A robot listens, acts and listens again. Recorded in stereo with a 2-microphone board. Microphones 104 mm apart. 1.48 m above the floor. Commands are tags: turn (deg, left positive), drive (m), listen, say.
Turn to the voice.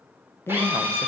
<turn deg="25"/>
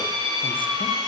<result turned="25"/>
<listen/>
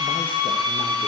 <listen/>
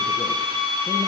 <say>I heard a man speaking, but can't make it out now. It was about straight ahead or 130° left.</say>